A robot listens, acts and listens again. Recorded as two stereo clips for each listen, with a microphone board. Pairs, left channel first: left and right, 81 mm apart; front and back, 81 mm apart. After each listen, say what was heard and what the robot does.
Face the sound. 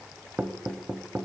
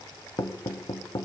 The knocking: 25° right. Turn 25° right.
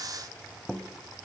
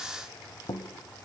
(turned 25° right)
Facing the knocking.